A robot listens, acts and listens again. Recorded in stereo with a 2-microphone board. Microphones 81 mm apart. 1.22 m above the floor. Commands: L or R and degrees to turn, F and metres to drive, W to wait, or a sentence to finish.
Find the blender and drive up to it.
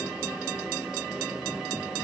W
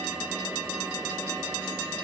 W
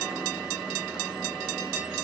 I can't make out a blender to turn to.